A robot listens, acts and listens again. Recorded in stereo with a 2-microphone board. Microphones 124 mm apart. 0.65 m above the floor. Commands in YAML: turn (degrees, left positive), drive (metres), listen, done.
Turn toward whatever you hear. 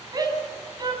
turn: -30
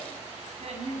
turn: -120
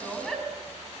done: "Facing the shout."